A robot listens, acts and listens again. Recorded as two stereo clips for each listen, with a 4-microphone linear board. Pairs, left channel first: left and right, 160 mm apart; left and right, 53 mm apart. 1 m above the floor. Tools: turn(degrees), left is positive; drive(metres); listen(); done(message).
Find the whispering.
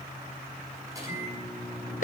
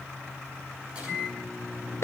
listen()
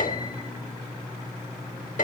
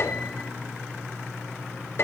listen()
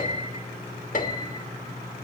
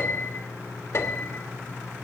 done("I can't make out whispering, only a microwave and a piano.")